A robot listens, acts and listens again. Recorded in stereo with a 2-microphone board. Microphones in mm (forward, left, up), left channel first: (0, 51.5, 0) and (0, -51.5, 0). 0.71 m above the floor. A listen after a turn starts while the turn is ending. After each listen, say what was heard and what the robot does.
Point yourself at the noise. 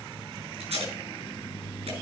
Turn 90° right.
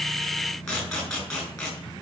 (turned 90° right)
Facing the tape being pulled.